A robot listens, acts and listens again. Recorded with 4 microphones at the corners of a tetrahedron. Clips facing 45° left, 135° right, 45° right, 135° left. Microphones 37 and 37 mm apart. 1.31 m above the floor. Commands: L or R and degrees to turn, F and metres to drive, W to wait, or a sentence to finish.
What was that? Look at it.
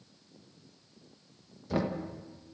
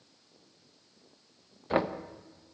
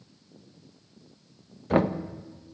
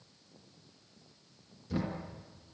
R80
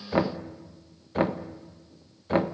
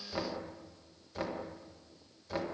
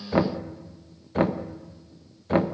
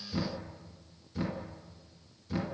Found it: knocking, straight ahead, 1 to 2 m away.